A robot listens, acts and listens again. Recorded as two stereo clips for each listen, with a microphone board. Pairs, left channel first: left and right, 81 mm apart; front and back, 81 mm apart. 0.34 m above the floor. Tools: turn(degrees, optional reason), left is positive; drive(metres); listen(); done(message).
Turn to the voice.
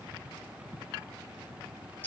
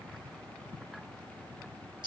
listen()
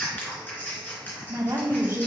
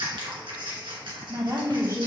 turn(degrees=-140, reason="The woman speaking: 140° right.")
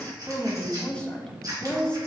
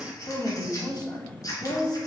turn(degrees=15, reason="The woman speaking is now 15° left.")
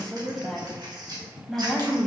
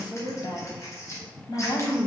done("Found it: a woman speaking, straight ahead, 1 to 2 m away.")